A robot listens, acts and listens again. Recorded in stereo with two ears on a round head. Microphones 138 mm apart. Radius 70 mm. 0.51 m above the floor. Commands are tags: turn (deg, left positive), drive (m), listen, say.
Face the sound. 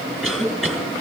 <turn deg="-30"/>
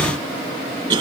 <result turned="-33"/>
<turn deg="-140"/>
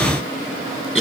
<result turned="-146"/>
<say>Found it: a cough, straight ahead, over 4 m away.</say>